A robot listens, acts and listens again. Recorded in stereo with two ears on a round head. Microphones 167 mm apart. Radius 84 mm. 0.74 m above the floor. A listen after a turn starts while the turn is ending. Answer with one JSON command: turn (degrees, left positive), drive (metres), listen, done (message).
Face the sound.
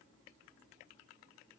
{"listen": true}
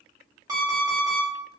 {"turn": -20}
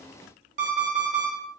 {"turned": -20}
{"turn": -140}
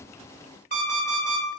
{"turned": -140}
{"turn": -55}
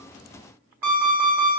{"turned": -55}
{"turn": -10}
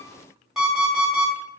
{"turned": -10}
{"done": "Facing the alarm clock, 1 to 2 m away."}